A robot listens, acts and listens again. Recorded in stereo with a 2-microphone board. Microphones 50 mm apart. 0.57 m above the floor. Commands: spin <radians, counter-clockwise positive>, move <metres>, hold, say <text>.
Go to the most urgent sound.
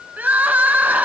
spin -0.61
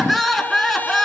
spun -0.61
move 1.0
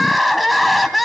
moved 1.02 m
move 1.0
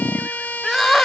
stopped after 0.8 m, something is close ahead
say Arrived at the crying, straight ahead.